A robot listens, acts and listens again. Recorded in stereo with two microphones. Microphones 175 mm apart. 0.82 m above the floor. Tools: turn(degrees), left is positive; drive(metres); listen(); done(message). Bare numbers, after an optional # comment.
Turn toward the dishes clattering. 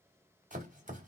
listen()
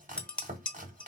turn(30)
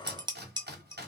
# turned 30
# So it is at 25° right.
turn(-25)
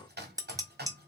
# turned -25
# The dishes clattering is now 20° right.
turn(-20)
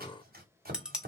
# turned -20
done("Found it: dishes clattering, straight ahead.")